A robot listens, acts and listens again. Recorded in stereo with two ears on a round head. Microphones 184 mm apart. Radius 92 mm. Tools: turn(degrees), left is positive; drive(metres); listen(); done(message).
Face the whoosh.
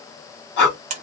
listen()
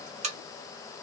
listen()
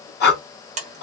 done("I can't make out a whoosh, only breathing and a buzzer.")